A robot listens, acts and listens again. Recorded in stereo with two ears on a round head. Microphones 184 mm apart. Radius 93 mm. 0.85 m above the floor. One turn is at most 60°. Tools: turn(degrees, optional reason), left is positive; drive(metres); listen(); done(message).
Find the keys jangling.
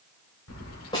turn(degrees=60, reason="The keys jangling: about 70° left or 110° left.")
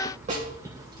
turn(degrees=-20, reason="So it is at 20° right.")
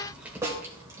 turn(degrees=-15, reason="The keys jangling is now 15° right.")
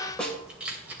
turn(degrees=-10, reason="The keys jangling is now 10° right.")
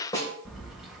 done("Facing the keys jangling, 2 to 4 m away.")